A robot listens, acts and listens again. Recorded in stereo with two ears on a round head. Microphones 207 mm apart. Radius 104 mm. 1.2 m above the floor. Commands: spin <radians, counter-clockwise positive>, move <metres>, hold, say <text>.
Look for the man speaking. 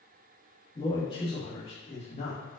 spin 0.52
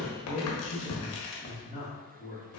spin 0.61
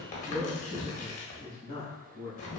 spin 0.44
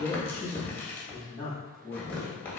say Found it: a man speaking, straight ahead, 1 to 2 m away.